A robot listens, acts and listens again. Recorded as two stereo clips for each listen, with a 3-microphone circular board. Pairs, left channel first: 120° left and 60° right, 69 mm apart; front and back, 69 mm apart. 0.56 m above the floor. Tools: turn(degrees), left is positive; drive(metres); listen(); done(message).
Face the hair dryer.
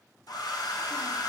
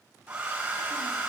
turn(degrees=105)
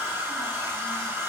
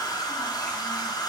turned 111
done("Facing the hair dryer, 2 to 4 m away.")